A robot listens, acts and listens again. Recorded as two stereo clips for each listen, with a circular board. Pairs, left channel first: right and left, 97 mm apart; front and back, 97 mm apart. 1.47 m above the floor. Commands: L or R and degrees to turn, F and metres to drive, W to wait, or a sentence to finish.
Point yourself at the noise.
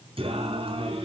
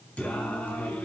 L75
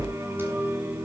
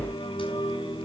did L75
L20
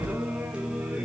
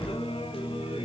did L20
L10
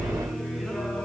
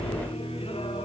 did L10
Found it: singing, straight ahead.